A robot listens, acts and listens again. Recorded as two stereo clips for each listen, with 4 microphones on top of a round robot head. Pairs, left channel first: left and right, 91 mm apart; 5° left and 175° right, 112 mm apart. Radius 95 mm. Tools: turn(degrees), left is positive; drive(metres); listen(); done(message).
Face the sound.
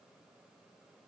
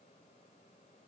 listen()
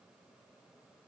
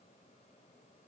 listen()
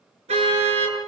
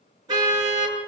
turn(degrees=-115)
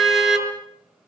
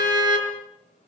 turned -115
done("Facing the car horn, over 4 m away.")